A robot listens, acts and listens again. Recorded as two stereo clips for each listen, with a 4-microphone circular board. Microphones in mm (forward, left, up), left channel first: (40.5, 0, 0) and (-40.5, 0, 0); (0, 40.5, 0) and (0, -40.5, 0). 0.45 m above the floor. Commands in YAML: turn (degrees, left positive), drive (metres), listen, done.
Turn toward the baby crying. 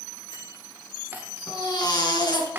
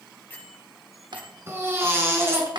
turn: -30
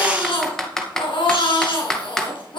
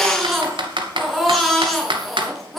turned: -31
done: "Facing the baby crying."